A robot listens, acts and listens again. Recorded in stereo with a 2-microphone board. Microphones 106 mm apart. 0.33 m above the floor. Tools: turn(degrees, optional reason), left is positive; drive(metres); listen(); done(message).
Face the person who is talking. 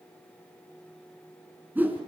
listen()
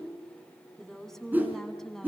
turn(degrees=30)
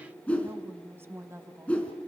turn(degrees=-20, reason="So it is at 20° right.")
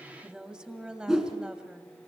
turn(degrees=-10, reason="The woman speaking is now 10° right.")
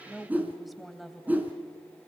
done("Found it: a woman speaking, straight ahead, 2 to 4 m away.")